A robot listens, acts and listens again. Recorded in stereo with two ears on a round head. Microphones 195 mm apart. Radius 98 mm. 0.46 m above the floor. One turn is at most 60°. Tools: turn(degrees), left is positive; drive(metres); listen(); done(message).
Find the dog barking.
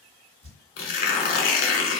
listen()
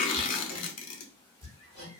listen()
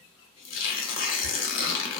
done("I can't make out a dog barking to turn to.")